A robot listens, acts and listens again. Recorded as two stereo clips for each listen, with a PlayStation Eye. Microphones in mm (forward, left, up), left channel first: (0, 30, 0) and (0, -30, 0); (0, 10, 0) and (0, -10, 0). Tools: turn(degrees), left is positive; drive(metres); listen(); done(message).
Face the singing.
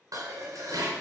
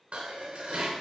listen()
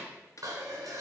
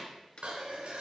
listen()
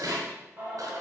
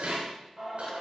turn(degrees=-25)
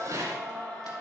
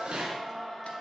turn(degrees=15)
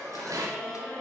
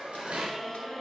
turn(degrees=15)
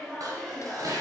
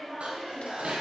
turn(degrees=20)
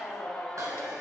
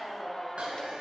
turn(degrees=10)
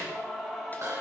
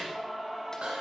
done("Found it: singing, straight ahead.")